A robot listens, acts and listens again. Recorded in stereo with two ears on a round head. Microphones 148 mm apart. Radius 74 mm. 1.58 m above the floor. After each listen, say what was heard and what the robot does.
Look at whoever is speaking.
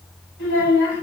The child speaking: about 70° left or 110° left. Turn 70° left.
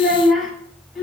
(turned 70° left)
Facing the child speaking.